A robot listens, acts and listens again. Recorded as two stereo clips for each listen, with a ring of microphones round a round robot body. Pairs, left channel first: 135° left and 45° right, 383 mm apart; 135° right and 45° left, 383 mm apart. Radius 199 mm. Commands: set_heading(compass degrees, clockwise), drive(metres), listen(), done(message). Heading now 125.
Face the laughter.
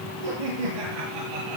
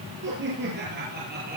set_heading(145)
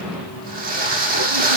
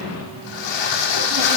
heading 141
listen()
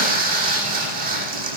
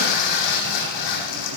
listen()
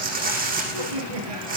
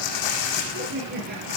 set_heading(161)
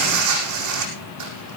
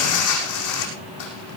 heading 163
listen()
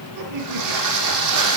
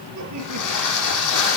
done("Facing the laughter.")